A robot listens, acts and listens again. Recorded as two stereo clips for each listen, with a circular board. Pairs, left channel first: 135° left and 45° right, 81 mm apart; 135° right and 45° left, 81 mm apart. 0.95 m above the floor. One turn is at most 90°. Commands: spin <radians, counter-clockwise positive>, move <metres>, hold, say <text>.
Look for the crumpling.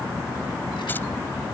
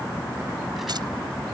hold
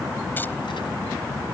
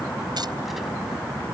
hold
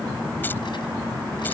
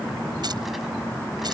say I can't make out crumpling.